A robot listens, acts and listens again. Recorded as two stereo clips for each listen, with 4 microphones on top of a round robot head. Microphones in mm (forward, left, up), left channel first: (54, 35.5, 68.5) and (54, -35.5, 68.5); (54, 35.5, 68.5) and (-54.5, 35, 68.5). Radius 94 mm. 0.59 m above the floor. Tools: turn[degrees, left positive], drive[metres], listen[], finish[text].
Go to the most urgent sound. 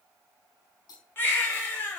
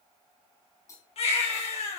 Thought: The baby crying: 30° left.
Action: turn[30]
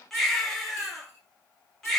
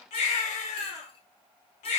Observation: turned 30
Action: drive[1.0]
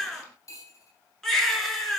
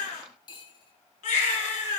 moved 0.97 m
Action: drive[1.0]
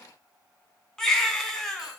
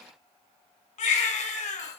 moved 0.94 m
Thought: The baby crying is now 10° left.
Action: turn[10]
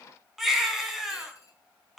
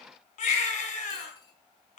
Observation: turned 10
Action: drive[1.0]
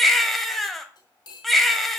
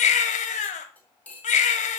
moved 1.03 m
Action: drive[1.0]
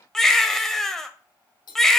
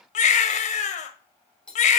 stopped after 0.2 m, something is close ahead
Action: finish[I am next to the baby crying.]